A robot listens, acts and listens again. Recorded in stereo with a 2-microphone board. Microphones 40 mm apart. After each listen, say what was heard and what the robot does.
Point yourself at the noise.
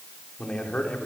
The man speaking: about 35° left or 145° left. Turn 35° left.
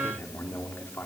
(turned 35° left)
So it is at 105° left. Turn 105° left.
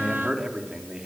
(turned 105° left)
The man speaking is now 20° right. Turn 20° right.
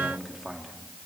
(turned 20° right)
The man speaking is now 10° right. Turn 10° right.
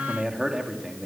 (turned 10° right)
The man speaking is now 20° right. Turn 20° right.
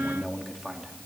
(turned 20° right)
Found it: a man speaking, straight ahead, 2 to 4 m away.